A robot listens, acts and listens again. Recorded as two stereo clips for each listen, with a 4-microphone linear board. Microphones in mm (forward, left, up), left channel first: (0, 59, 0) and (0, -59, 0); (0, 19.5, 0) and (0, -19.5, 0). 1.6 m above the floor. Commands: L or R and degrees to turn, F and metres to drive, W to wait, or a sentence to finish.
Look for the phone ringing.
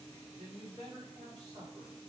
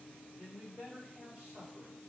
W
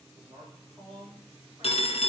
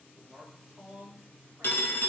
L60
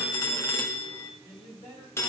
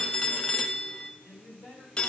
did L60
L25
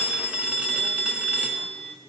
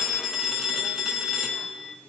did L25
R15
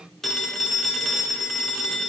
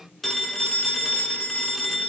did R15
Found it: a phone ringing, straight ahead.